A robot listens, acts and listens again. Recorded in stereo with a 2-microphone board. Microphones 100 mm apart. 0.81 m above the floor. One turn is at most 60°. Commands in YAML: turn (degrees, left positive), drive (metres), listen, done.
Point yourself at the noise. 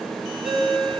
turn: -60
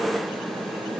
listen: true
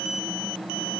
listen: true
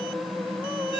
done: "Facing the ringtone."